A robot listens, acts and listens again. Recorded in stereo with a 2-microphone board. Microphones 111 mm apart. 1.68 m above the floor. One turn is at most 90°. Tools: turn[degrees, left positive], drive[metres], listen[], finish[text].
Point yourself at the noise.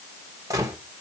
Thought: The gunshot: about 30° right or 150° right.
Action: turn[-30]
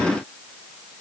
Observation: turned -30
Action: listen[]
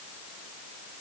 Action: finish[I heard a gunshot, but can't make it out now. It was about straight ahead or 120° right.]